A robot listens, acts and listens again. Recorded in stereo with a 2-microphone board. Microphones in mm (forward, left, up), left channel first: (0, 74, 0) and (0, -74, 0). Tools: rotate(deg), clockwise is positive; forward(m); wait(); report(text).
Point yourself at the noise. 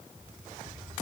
wait()
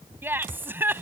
rotate(30)
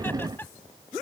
rotate(-15)
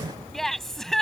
report("Facing the laughter.")